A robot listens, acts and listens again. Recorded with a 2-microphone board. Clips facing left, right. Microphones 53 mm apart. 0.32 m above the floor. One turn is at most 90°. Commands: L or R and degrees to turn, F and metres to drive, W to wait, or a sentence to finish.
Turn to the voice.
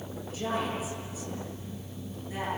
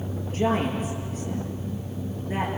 R40
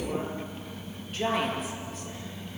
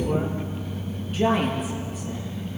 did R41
Found it: a woman speaking, straight ahead.